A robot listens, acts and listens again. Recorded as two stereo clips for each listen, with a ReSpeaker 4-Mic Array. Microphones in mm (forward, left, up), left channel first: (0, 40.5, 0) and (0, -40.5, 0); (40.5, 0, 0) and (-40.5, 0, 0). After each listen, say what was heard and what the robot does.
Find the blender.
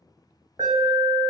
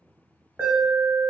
Keep listening.
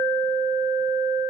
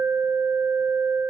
Keep listening.
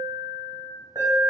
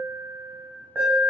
I can't make out a blender to turn to.